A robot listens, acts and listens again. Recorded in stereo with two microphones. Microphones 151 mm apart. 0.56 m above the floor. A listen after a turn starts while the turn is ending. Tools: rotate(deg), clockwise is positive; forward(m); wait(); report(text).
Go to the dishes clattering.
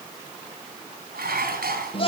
rotate(90)
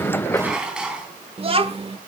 forward(1.0)
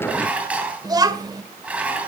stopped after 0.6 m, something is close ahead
rotate(10)
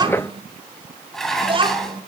report("Blocked. The dishes clattering is further on, straight ahead.")